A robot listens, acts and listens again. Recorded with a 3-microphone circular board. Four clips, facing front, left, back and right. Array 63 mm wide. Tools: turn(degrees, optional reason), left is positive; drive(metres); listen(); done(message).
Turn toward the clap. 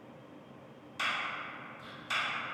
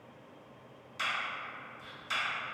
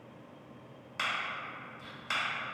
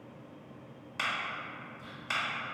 turn(degrees=-130, reason="The clap: 130° right.")
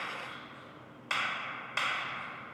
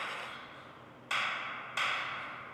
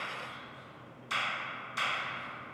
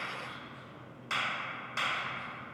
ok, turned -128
done("Found it: a clap, straight ahead, 1 to 2 m away.")